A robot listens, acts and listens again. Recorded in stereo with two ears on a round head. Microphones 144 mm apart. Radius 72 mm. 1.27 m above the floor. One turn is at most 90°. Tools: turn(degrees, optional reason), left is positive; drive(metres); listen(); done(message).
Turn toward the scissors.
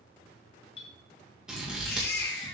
turn(degrees=-30)
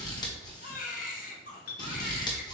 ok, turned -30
turn(degrees=25, reason="So it is at 25° left.")
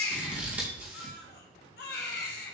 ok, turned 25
turn(degrees=-10, reason="The scissors is now 10° right.")
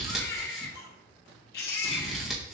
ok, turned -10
done("Facing the scissors, 1 to 2 m away.")